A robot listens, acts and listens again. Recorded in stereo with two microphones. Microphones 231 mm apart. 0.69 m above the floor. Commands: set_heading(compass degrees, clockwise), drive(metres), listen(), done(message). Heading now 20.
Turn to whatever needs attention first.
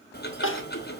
set_heading(320)
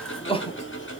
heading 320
set_heading(295)
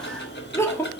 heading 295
set_heading(285)
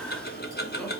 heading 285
listen()
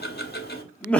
done("Found it: crying, straight ahead, 1 to 2 m away.")